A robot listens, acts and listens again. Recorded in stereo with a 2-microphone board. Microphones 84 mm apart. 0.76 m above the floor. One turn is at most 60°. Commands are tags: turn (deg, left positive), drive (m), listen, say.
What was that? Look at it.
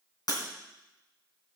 <turn deg="50"/>
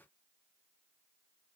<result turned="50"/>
<listen/>
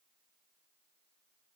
<say>I heard breaking glass, but can't make it out now. It was about straight ahead or 80° left.</say>